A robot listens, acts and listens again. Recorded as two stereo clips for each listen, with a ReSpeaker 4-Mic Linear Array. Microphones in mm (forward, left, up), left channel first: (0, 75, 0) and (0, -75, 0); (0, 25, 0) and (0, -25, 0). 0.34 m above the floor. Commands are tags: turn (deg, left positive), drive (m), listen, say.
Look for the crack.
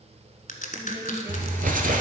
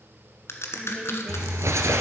<turn deg="65"/>
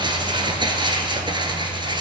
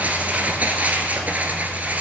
<listen/>
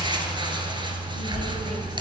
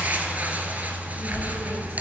<say>I heard a crack, but can't make it out now. It was about straight ahead or 50° left.</say>